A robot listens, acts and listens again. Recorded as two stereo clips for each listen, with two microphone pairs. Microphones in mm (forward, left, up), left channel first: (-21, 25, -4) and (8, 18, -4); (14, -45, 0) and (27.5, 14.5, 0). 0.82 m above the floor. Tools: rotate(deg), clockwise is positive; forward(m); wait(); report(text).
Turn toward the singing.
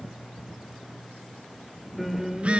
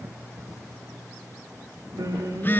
rotate(-70)
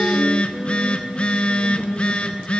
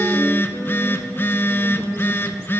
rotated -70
wait()
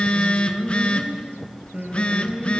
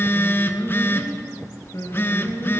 rotate(70)
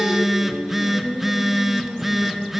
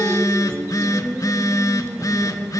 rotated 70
rotate(15)
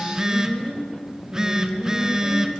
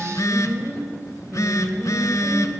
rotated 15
report("Found it: singing, straight ahead, 2 to 4 m away.")